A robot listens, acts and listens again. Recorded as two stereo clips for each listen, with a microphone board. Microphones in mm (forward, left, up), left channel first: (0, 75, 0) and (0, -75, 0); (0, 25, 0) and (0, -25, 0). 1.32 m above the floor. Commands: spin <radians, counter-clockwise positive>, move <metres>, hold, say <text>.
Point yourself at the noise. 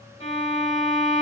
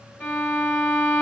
spin 0.70
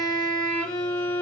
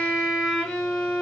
spin 0.17
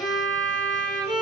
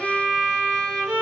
say Facing the violin, 1 to 2 m away.